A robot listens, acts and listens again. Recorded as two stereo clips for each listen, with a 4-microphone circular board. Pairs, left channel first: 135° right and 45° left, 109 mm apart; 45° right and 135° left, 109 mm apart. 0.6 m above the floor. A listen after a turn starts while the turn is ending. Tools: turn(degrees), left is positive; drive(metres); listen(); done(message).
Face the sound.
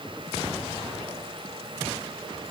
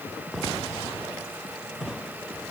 listen()
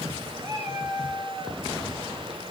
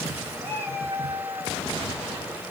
turn(degrees=110)
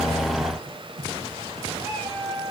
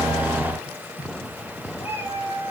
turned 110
turn(degrees=-15)
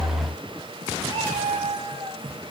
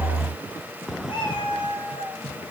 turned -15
done("Facing the cat meowing, over 4 m away.")